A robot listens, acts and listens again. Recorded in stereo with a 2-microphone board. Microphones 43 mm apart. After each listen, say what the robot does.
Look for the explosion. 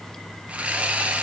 Keep listening.
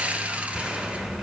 Turn 30° right.
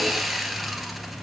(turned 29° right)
Keep listening.
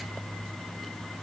I heard an explosion, but can't make it out now. It was about 20° left or 140° right.